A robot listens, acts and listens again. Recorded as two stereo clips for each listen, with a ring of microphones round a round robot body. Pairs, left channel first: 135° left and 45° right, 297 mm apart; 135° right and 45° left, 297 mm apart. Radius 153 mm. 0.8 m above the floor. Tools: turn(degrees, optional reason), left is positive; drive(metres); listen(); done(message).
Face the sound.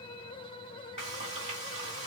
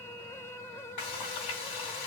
turn(degrees=-115, reason="The frying: 115° right.")
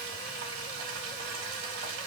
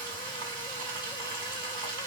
done("Found it: frying, straight ahead, 2 to 4 m away.")